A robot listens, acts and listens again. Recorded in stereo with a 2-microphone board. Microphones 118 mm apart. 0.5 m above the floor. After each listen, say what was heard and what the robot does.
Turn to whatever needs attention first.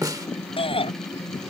The shout: about 50° left or 130° left. Turn 50° left.
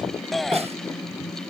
Facing the shout.